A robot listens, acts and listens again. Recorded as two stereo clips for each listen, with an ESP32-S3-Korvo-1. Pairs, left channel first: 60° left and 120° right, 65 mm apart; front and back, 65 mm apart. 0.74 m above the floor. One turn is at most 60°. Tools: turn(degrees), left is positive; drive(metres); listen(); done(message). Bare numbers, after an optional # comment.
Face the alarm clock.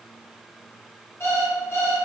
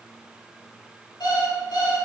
# The alarm clock: 10° left.
turn(10)
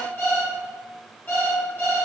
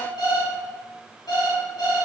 done("Facing the alarm clock, 1 to 2 m away.")